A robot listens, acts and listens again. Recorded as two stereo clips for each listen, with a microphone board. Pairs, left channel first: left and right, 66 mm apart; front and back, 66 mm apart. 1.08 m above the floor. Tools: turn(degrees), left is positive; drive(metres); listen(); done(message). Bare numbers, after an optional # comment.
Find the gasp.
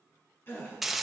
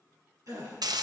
# The gasp: 150° left.
turn(150)
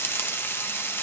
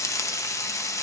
done("I heard a gasp from this way, but can't make it out now.")